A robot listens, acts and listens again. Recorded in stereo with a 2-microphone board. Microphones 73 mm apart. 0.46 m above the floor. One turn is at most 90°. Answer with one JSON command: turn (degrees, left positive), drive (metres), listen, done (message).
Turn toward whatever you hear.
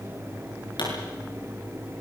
{"turn": 90}
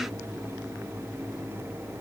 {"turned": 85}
{"done": "I heard a pop from this way, but can't make it out now."}